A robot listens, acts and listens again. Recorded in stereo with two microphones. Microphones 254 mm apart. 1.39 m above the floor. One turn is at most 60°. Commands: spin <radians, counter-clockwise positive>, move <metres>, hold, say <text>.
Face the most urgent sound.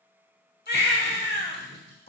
spin 0.70
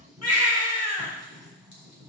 spin 1.05
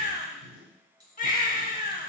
spin 0.61
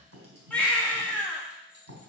say Facing the baby crying.